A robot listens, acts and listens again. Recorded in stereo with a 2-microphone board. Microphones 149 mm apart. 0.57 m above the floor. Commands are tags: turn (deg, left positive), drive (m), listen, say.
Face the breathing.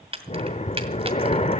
<turn deg="45"/>
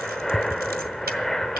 <say>Facing the breathing, under 1 m away.</say>